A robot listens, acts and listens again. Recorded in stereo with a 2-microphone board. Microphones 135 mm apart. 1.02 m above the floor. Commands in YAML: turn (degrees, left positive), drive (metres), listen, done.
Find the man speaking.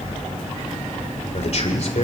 turn: 55
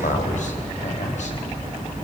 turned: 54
turn: 65
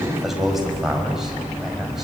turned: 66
done: "Found it: a man speaking, straight ahead, over 4 m away."